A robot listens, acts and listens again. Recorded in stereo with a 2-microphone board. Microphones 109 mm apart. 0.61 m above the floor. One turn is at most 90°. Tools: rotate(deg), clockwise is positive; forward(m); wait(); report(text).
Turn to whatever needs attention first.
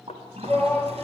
rotate(-30)
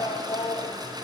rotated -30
rotate(-90)
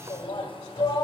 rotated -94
rotate(-45)
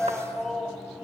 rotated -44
report("Found it: a shout, straight ahead.")